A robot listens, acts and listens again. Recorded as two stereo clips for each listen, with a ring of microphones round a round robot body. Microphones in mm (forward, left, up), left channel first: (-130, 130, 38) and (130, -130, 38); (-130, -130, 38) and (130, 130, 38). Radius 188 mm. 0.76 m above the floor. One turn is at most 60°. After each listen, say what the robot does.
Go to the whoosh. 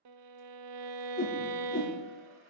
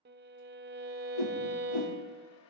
Turn 60° right.
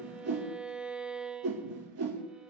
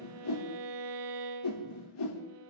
Turn 60° right.
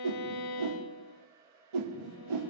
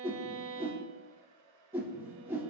Turn 40° right.
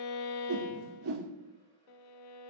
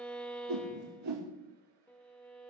Drive 1.0 m forward.
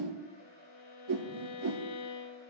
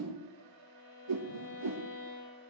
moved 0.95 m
Drive 1.0 m forward.
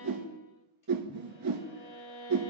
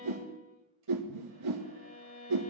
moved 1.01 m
Drive 1.0 m forward.
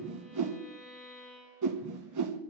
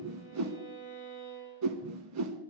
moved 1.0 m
Drive 1.0 m forward.
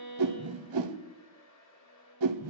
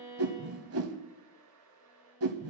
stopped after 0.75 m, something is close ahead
I am next to the whoosh.